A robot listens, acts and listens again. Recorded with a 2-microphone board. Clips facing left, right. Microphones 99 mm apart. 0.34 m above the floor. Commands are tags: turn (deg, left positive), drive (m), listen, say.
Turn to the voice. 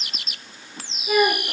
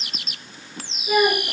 <turn deg="30"/>
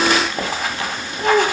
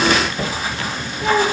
<turn deg="140"/>
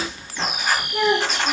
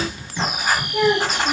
<turn deg="40"/>
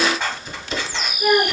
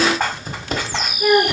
<say>Found it: a child speaking, straight ahead.</say>